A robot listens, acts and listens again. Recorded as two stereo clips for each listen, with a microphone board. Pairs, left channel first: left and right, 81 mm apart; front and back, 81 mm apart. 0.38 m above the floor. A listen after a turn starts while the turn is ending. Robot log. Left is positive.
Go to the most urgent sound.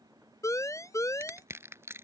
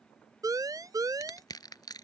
note: The siren: 140° left.
cmd yaw +140
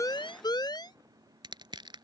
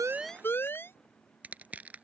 note: The siren is now 60° left.
cmd yaw +60
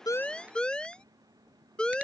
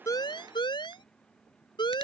note: The siren is now 10° left.
cmd yaw +10
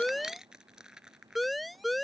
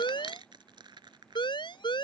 cmd fwd 1.0
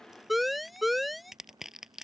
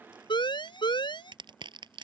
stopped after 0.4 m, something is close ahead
end: Something is in my way. I am facing the siren but have not reached it.